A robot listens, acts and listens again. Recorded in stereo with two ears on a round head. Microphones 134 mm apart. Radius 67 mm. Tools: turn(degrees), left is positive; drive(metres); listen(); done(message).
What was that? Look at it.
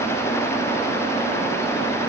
listen()
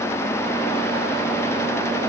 listen()
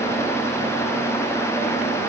done("I can't make out anything to turn to.")